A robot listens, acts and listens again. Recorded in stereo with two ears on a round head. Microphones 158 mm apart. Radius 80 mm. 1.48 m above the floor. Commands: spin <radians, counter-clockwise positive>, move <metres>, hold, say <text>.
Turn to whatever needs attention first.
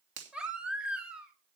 spin -0.52
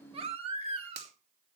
spin -2.53
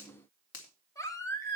spin 0.35
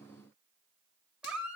say Facing the baby crying.